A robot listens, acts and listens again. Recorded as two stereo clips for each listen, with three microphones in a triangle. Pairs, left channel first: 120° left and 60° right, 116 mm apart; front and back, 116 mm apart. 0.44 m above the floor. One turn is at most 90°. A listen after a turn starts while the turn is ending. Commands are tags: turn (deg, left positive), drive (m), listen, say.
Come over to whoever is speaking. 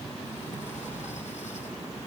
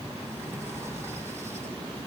<listen/>
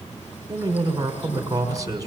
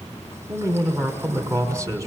<turn deg="-90"/>
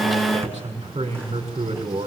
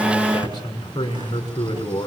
<turn deg="-50"/>
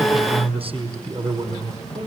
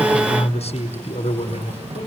<turn deg="-25"/>
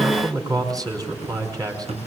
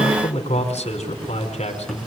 <drive m="1.0"/>
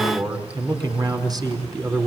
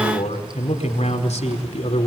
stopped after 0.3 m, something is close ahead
<say>Something is in my way. I am facing the man speaking but have not reached it.</say>